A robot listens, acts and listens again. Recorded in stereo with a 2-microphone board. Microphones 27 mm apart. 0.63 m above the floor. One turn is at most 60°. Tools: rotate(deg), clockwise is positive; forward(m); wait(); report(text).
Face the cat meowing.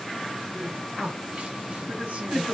wait()
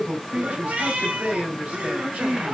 rotate(60)
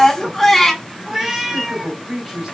rotate(10)
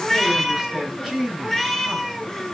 report("Facing the cat meowing.")